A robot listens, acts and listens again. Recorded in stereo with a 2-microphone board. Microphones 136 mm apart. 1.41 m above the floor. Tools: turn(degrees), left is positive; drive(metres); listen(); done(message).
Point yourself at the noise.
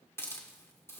turn(degrees=20)
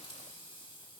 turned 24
turn(degrees=135)
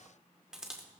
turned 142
done("Facing the hiss, 1 to 2 m away.")